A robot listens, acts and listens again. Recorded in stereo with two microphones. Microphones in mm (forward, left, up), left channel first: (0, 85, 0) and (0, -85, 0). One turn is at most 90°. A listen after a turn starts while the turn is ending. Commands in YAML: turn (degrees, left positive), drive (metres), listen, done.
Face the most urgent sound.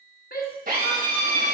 turn: 60
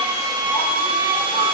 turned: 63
listen: true
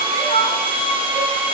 turn: 45
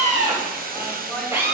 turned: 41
listen: true
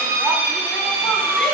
listen: true
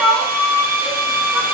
done: "Facing the shout."